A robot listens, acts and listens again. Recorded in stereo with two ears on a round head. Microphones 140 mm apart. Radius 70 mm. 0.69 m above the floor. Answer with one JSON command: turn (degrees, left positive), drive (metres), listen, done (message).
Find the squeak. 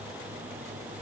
{"listen": true}
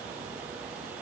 {"listen": true}
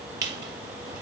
{"turn": -25}
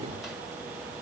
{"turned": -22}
{"listen": true}
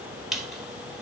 {"done": "Facing the squeak, 1 to 2 m away."}